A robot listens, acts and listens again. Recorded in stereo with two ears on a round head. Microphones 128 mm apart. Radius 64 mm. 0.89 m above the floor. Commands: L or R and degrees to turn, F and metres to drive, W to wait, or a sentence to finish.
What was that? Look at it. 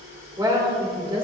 R35
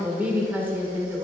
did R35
R20
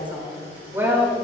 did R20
R20
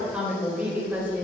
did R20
R15
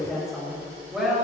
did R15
Found it: a woman speaking, straight ahead, 2 to 4 m away.